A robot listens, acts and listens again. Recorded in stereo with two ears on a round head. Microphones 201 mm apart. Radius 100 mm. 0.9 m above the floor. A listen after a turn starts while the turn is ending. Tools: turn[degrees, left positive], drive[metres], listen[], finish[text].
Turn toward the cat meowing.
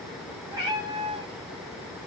Thought: The cat meowing: about 20° right or 160° right.
Action: turn[-20]
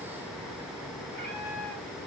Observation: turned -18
Action: listen[]
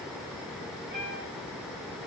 Thought: So it is at 125° right.
Action: turn[-125]
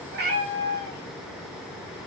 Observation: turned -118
Thought: The cat meowing is now 15° left.
Action: turn[15]
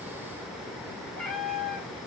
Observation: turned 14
Action: finish[Found it: a cat meowing, straight ahead, 1 to 2 m away.]